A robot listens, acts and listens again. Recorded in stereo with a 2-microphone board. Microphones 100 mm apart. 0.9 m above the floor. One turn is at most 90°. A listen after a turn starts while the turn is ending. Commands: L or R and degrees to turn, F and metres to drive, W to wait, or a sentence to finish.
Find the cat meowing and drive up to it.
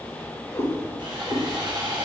L25
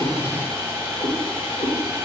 L90
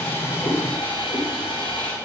L35
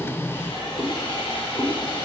F1.0
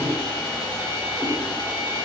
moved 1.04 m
W
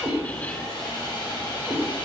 L10
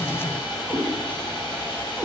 F1.0
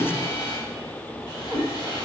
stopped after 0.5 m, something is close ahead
I am next to the cat meowing.